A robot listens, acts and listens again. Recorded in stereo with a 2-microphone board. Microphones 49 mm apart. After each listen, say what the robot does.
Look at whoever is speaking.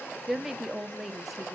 Turn 30° right.
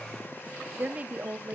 Turn 150° right.
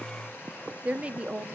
Turn 25° right.
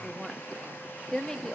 Turn 10° left.
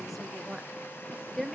Facing the woman speaking, 1 to 2 m away.